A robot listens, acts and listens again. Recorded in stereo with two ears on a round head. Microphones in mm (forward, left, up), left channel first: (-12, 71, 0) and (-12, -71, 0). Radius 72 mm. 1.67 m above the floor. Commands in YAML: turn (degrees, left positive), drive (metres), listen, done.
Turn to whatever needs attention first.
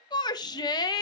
turn: 25
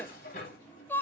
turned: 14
turn: 10
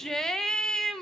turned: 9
done: "Found it: a shout, straight ahead, under 1 m away."